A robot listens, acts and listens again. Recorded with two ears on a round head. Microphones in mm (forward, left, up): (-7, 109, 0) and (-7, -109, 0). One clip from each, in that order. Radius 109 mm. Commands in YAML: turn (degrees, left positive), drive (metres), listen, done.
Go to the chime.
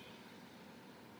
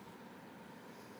listen: true
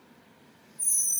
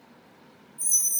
turn: -45
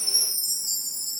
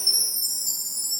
turn: -95
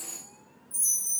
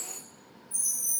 drive: 1.0
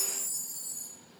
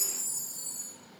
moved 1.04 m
drive: 1.0
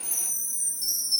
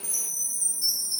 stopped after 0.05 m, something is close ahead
turn: 10
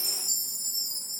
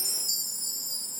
done: "I am next to the chime."